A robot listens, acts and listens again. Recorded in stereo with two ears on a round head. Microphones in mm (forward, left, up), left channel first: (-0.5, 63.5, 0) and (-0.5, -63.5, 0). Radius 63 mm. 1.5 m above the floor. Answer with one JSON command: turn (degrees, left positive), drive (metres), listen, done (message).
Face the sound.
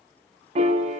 {"turn": -45}
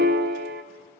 {"turn": -90}
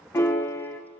{"turn": 20}
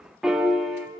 {"done": "Facing the piano, under 1 m away."}